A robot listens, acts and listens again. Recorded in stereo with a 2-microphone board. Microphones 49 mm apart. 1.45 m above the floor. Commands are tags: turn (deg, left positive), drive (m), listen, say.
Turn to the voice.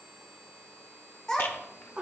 <turn deg="30"/>
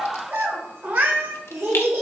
<turn deg="-65"/>
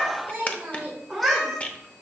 <turn deg="-20"/>
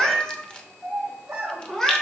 <turn deg="-20"/>
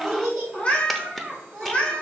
<say>Facing the child speaking.</say>